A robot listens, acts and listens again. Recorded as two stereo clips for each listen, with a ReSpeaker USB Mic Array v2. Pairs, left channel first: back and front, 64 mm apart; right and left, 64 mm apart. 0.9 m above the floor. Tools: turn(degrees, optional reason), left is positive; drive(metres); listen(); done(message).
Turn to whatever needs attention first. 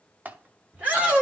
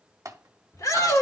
turn(degrees=-70, reason="The shout: 70° right.")
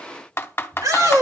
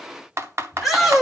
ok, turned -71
done("Facing the shout, 2 to 4 m away.")